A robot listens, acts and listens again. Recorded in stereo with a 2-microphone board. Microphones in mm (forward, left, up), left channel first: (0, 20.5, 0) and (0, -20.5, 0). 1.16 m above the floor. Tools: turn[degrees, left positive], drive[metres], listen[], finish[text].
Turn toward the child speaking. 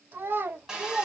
Thought: The child speaking: about 60° right or 120° right.
Action: turn[-60]
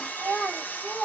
Thought: So it is at 15° left.
Action: turn[15]
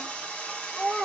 Action: finish[Found it: a child speaking, straight ahead, 2 to 4 m away.]